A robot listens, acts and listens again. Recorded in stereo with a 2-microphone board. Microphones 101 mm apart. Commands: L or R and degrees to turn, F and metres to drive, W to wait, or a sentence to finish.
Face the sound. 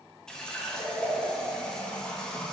L30
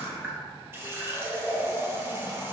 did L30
R25
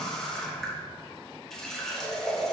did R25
Facing the running tap, 1 to 2 m away.